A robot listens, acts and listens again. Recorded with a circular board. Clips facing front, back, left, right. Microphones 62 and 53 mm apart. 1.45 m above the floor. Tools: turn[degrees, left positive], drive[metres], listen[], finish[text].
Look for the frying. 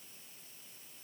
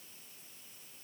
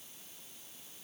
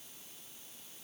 Action: listen[]
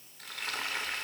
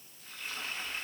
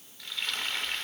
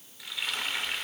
Action: finish[Facing the frying.]